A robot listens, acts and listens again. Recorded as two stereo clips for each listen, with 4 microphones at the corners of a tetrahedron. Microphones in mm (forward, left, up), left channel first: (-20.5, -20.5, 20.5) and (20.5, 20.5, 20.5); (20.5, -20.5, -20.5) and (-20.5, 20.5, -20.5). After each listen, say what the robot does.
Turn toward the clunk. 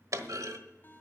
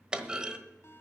Turn 60° left.
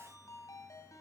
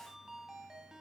Facing where the clunk came from. I can't hear it now.